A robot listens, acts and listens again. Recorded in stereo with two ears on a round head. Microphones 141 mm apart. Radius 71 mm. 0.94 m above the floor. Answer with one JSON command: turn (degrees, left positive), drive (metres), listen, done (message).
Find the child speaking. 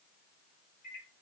{"listen": true}
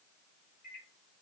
{"listen": true}
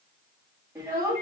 {"turn": -20}
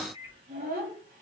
{"turn": -120}
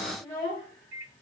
{"turn": 25}
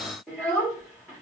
{"done": "Facing the child speaking, 1 to 2 m away."}